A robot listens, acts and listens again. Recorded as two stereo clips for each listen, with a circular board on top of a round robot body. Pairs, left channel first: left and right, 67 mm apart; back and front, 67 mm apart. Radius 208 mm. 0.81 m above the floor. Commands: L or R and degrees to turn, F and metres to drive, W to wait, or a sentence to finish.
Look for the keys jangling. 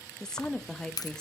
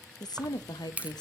L70
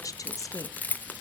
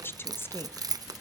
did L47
L25
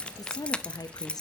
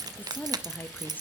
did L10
L15
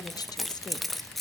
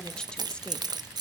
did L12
Facing the keys jangling, under 1 m away.